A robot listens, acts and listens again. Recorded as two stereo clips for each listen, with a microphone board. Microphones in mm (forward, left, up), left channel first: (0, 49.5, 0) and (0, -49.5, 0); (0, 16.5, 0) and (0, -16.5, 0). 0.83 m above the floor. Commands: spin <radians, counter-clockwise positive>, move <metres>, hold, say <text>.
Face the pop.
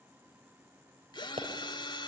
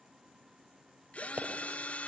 spin -1.22
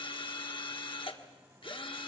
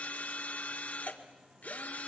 hold
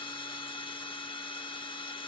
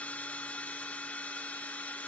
say I heard a pop, but can't make it out now. It was about straight ahead or 40° right.